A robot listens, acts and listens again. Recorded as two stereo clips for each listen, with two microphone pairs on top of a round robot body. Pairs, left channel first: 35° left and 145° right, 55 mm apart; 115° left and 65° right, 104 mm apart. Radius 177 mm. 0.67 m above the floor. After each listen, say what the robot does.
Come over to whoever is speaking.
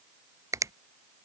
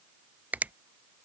Keep listening.
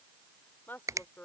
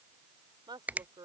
Turn 20° right.
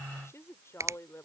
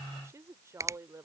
Drive 1.0 m forward.
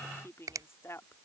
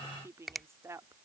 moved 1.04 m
Drive 1.0 m forward.
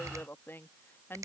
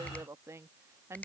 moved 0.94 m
Turn 10° right.
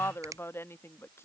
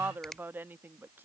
Drive 1.0 m forward.
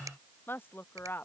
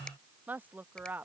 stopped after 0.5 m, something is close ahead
Arrived at the woman speaking, straight ahead.